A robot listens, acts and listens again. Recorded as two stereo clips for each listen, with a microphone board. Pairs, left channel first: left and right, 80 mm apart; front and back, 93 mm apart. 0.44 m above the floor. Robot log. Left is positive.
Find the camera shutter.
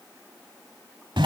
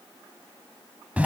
cmd idle
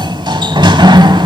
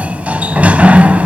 cmd idle
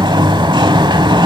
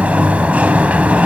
end: I can't make out a camera shutter to turn to.